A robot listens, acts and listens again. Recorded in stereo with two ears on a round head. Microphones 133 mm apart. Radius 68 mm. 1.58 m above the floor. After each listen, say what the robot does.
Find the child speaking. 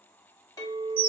Keep listening.
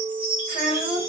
Turn 40° right.
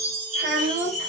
Turn 95° right.
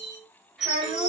Facing the child speaking, 2 to 4 m away.